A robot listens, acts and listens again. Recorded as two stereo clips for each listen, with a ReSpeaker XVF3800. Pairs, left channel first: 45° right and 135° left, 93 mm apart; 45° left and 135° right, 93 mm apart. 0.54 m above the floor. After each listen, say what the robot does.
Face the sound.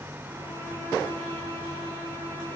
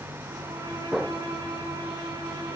Turn 105° right.
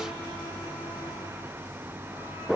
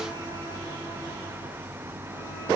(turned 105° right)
Keep listening.
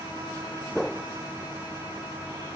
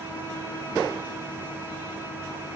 Turn 10° right.
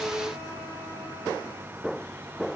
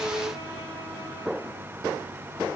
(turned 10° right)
Keep listening.
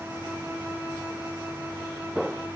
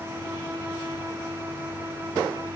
Found it: a violin, straight ahead.